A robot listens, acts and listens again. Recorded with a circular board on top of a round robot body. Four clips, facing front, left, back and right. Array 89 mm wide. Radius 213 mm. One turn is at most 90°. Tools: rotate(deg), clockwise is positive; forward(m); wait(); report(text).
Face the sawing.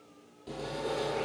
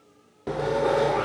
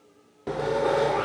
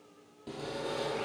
rotate(-90)
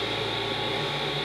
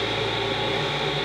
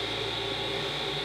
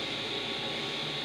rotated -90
rotate(-80)
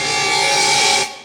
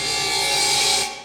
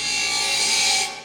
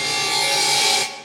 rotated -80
rotate(10)
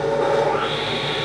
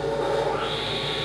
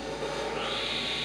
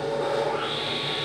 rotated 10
report("Facing the sawing, under 1 m away.")